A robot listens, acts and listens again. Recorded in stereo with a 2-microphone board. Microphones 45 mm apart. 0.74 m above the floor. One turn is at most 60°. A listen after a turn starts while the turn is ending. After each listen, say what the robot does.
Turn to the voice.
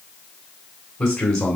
Turn 15° left.
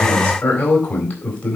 Turn 60° left.
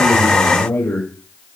Turn 60° left.
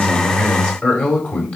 Turn 30° left.
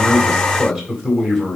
Found it: a man speaking, straight ahead, 2 to 4 m away.